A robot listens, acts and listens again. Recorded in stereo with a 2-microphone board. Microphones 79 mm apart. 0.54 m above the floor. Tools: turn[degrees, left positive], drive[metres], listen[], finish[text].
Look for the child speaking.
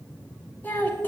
Thought: The child speaking: about 25° left or 155° left.
Action: turn[25]
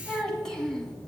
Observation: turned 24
Action: turn[30]
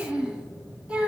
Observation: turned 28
Thought: So it is at 15° right.
Action: turn[-15]
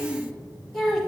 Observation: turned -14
Action: finish[Facing the child speaking, 2 to 4 m away.]